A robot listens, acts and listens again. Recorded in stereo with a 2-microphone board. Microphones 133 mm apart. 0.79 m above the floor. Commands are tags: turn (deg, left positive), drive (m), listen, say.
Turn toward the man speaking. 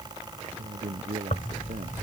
<turn deg="-90"/>
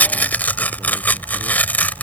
<listen/>
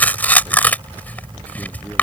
<listen/>
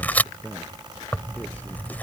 <turn deg="10"/>
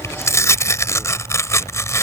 <listen/>
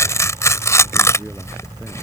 <listen/>
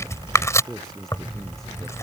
<say>Facing the man speaking.</say>